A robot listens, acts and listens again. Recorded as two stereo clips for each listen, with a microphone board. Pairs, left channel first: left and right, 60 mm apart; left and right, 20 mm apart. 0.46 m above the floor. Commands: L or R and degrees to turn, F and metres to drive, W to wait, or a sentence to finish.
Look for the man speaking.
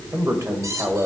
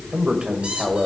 R55
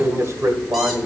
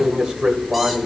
R55
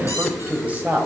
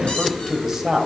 R30
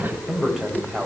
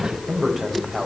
R15
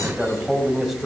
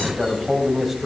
Found it: a man speaking, straight ahead, 2 to 4 m away.